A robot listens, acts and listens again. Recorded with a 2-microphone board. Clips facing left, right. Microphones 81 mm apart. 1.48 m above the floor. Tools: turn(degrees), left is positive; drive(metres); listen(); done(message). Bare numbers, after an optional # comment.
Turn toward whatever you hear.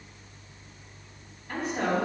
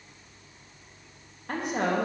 # The woman speaking: about 60° right or 120° right.
turn(-60)
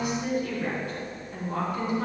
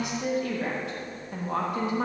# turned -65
# So it is at 85° right.
turn(-85)
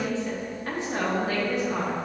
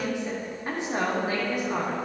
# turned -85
# The woman speaking is now 20° right.
turn(-20)
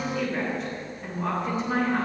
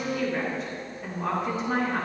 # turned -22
done("Found it: a woman speaking, straight ahead.")